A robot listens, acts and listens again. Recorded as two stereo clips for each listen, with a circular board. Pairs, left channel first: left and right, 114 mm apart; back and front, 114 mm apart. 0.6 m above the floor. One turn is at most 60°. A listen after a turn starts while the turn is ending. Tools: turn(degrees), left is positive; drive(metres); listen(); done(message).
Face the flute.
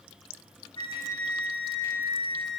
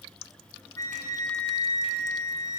turn(degrees=60)
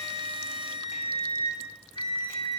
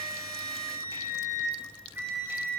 turn(degrees=60)
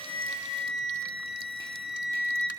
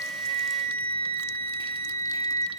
done("Found it: a flute, straight ahead.")